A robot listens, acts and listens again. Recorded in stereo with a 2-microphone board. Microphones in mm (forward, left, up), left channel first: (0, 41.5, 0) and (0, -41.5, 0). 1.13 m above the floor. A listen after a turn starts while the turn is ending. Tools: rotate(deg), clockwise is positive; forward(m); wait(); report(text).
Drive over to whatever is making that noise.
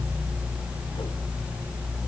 wait()
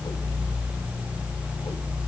wait()
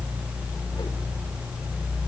report("I can't make out anything.")